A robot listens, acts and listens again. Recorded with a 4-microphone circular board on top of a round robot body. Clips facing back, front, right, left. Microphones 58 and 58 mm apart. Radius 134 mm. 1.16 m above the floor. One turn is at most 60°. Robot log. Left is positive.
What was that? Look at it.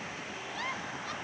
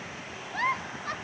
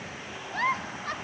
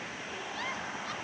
note: The giggle: 45° right.
cmd yaw -45
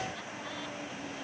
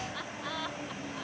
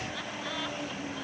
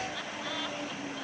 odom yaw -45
cmd idle
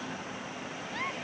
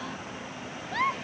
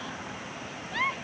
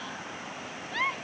end: Facing the giggle.